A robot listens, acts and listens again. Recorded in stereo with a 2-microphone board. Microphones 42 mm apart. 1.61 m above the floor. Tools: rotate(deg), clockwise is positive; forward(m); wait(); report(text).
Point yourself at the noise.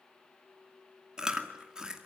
rotate(20)
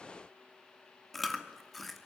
report("Found it: chewing, straight ahead, 2 to 4 m away.")